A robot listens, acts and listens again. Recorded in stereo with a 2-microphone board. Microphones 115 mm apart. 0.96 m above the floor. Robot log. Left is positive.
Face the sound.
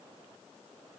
cmd idle
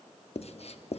note: The writing: about 65° left or 115° left.
cmd yaw +65
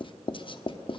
note: So it is at 45° left.
cmd yaw +45
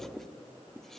end: Facing the writing, 1 to 2 m away.